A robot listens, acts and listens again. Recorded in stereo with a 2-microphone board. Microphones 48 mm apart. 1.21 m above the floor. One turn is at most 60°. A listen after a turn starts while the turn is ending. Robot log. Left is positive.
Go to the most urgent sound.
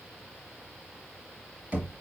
cmd idle
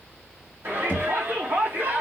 cmd yaw -60
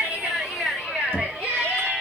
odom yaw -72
note: So it is at 10° right.
cmd yaw -10
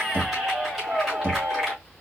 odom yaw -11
cmd fwd 1.0
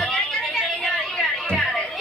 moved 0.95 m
cmd fwd 1.0
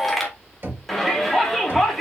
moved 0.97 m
cmd fwd 1.0
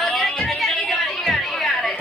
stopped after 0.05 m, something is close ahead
end: Arrived at the shout, straight ahead.